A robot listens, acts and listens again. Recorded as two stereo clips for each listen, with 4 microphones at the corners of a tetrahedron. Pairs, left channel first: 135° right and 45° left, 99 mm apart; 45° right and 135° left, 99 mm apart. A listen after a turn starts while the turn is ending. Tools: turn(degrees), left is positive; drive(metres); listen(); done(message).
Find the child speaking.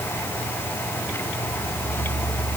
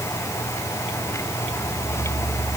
listen()
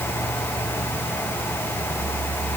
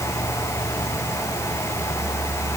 listen()
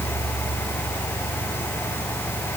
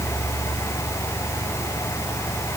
done("I can't make out a child speaking.")